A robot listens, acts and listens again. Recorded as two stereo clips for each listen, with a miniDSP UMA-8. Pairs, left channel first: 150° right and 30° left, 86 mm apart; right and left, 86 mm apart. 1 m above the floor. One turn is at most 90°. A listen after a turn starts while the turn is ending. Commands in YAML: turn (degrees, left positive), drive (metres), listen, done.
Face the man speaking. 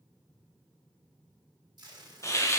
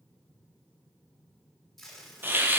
listen: true
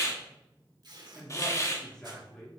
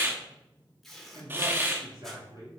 turn: 90
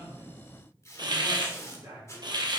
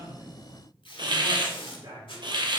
turn: 60
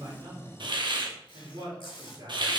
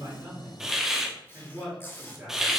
done: "Facing the man speaking."